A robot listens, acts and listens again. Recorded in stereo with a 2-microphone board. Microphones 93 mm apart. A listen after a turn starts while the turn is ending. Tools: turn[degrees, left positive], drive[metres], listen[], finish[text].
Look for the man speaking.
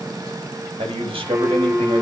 Action: turn[-90]
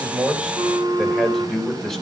Action: finish[Found it: a man speaking, straight ahead, 2 to 4 m away.]